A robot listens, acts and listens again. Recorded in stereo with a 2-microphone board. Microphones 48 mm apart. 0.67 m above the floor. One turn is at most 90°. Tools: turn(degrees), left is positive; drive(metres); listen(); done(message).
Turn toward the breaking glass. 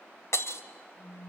turn(degrees=75)
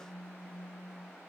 listen()
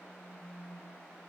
done("I heard breaking glass, but can't make it out now. It was about straight ahead or 30° left.")